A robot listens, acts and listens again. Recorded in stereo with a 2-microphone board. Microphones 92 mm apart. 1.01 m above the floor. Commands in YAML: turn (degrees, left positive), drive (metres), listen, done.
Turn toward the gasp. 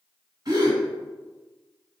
turn: -45
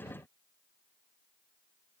listen: true
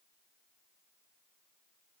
done: "I heard a gasp, but can't make it out now. It was about straight ahead or 90° right."